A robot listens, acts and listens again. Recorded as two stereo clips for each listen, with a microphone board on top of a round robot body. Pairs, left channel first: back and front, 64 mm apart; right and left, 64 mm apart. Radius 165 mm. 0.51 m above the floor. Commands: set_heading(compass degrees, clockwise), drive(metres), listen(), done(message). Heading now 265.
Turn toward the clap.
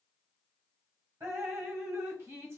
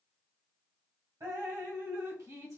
listen()
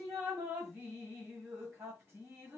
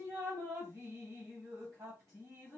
listen()
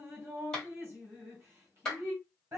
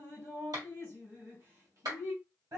set_heading(170)
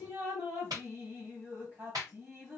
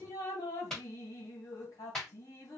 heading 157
set_heading(172)
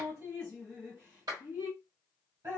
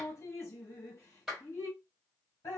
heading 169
done("Found it: a clap, straight ahead, 2 to 4 m away.")